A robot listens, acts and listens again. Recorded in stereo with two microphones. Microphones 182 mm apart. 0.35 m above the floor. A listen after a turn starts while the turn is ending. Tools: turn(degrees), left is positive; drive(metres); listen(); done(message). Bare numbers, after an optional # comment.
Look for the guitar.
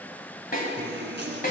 turn(-90)
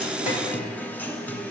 # So it is at 10° left.
turn(10)
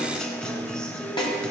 done("Facing the guitar, 1 to 2 m away.")